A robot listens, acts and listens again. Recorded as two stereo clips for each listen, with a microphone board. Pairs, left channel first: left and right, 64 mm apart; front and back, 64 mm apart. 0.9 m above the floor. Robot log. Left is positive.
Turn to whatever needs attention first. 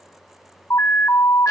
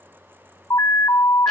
note: The alarm: 45° left.
cmd yaw +45
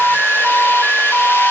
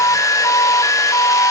note: The alarm is now 10° right.
cmd yaw -10
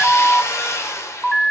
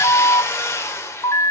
end: Facing the alarm.